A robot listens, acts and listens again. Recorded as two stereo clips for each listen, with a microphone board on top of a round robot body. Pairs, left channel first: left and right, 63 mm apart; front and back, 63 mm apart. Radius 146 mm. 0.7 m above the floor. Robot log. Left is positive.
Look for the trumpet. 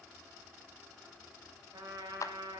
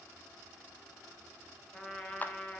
note: The trumpet: 75° right.
cmd yaw -75
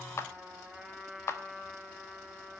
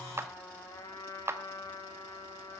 end: Facing the trumpet.